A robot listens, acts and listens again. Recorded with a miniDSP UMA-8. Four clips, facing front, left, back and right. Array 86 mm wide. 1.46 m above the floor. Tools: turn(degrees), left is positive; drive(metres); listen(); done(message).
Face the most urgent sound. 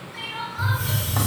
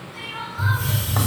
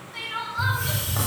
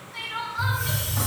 turn(degrees=-155)
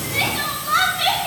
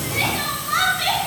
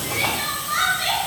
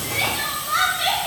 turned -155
turn(degrees=-10)
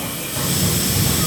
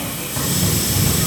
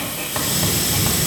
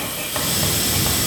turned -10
listen()
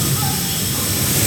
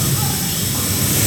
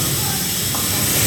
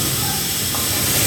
listen()
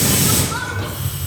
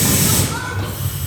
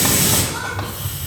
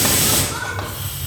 done("Facing where the crying came from. I can't hear it now.")